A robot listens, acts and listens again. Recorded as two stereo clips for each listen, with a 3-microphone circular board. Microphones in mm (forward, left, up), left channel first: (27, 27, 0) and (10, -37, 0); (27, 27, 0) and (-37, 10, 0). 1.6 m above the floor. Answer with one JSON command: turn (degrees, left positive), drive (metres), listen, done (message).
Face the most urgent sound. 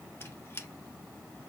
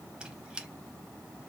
{"listen": true}
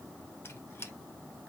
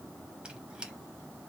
{"listen": true}
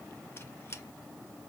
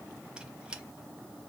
{"done": "I can't make out anything urgent, only a squeak."}